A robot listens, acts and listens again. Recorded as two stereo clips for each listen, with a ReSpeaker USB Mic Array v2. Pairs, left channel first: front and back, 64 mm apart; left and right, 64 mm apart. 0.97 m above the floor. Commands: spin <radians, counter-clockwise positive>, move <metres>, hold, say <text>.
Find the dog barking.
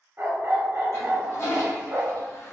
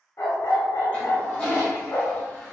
spin 2.09
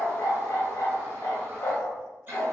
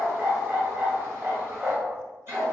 spin -0.52
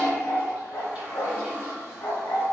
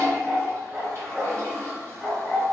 spin -0.26
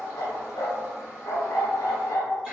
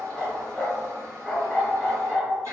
say Found it: a dog barking, straight ahead, 1 to 2 m away.